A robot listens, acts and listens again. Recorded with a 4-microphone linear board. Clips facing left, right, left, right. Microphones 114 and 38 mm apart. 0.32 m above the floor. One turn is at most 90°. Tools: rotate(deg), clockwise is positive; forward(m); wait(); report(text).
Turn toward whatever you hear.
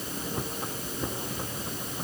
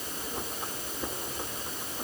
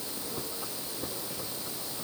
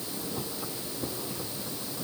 wait()
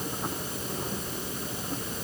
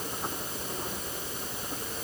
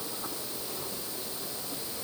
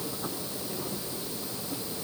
wait()
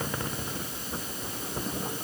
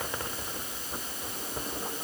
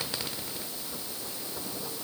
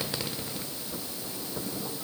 report("I can't make out anything to turn to.")